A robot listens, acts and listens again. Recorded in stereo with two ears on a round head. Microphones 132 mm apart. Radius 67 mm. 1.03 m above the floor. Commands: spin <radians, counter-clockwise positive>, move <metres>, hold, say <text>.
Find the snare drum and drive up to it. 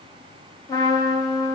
hold
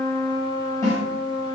spin 0.35
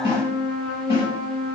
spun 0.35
spin 2.44
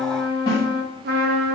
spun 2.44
spin 0.61
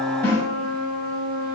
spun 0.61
spin 0.35
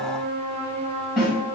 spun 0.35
move 1.0
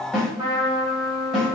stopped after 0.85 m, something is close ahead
say Arrived at the snare drum, straight ahead.